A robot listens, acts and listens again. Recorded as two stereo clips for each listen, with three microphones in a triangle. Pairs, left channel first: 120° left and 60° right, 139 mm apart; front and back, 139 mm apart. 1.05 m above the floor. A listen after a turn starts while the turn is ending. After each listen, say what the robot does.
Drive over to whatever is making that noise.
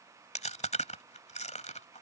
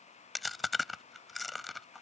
Turn 90° left.
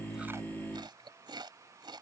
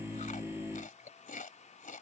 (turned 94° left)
Drive 1.0 m forward.
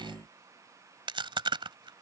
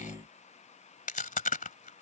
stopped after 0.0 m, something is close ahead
Turn 10° right.
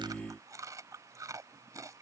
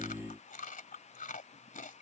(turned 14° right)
Blocked. The chewing is further on, straight ahead.